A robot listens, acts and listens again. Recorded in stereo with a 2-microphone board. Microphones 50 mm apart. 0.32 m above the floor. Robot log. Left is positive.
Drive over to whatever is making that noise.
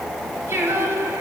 note: The singing: about 55° right or 125° right.
cmd yaw -55
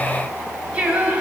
note: So it is at 25° right.
cmd yaw -25
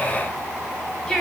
note: The singing is now 15° left.
cmd yaw +15
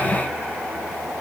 cmd idle
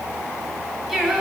cmd fwd 1.0
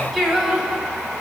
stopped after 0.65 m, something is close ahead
end: Arrived at the singing, straight ahead.